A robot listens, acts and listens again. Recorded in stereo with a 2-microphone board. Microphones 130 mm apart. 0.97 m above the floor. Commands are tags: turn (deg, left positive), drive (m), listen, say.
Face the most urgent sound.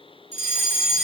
<turn deg="-60"/>
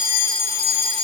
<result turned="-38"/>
<turn deg="-45"/>
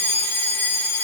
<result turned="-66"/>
<turn deg="20"/>
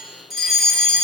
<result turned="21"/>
<say>Facing the fire alarm.</say>